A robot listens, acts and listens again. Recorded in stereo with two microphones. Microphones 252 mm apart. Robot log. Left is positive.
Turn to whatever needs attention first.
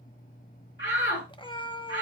note: The shout: about 50° left or 130° left.
cmd yaw +50
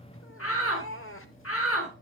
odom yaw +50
note: So it is at 75° left.
cmd yaw +75
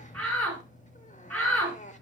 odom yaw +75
end: Found it: a shout, straight ahead.